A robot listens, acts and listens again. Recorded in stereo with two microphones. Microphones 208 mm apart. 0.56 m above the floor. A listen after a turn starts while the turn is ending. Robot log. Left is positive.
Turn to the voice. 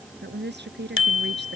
note: The woman speaking: about 55° right or 125° right.
cmd yaw -55
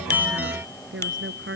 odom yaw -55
note: So it is at 70° right.
cmd yaw -70
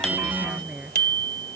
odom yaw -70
end: Found it: a woman speaking, straight ahead.